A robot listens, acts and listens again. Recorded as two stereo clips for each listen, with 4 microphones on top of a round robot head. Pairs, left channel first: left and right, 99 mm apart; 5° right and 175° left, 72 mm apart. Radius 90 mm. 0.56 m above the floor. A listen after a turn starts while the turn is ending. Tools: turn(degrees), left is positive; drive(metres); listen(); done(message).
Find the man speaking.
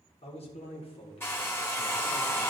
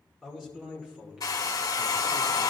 turn(degrees=100)
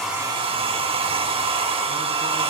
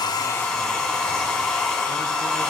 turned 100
listen()
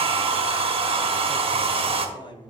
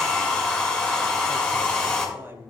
turn(degrees=120)
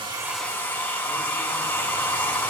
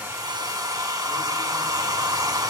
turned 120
listen()
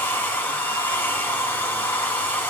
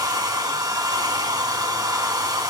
listen()
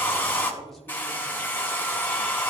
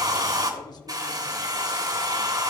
done("I heard a man speaking from this way, but can't make it out now.")